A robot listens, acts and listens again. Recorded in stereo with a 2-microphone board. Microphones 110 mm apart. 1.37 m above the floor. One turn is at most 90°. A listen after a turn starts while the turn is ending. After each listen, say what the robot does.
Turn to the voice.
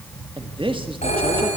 Turn 50° right.
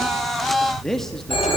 Found it: a man speaking, straight ahead.